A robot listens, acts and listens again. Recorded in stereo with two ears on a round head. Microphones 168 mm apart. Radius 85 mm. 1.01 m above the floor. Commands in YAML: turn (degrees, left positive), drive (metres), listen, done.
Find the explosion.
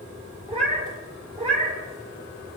listen: true
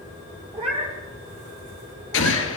turn: 75
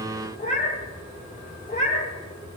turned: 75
listen: true
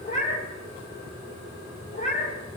done: "I heard an explosion, but can't make it out now. It was about straight ahead or 30° left."